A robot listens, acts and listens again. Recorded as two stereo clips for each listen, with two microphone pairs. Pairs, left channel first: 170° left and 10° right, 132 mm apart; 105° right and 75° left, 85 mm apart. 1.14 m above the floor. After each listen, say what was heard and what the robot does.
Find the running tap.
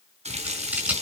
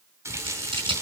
The running tap: 20° left. Turn 20° left.
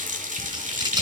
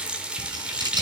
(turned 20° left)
Found it: a running tap, straight ahead.